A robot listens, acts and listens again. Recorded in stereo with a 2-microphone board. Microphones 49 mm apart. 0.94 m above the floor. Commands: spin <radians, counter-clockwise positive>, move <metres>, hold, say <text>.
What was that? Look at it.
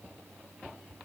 hold
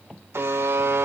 spin -0.96
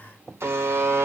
spin -1.13
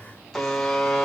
spin 0.17
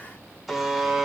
say Facing the buzzer, 2 to 4 m away.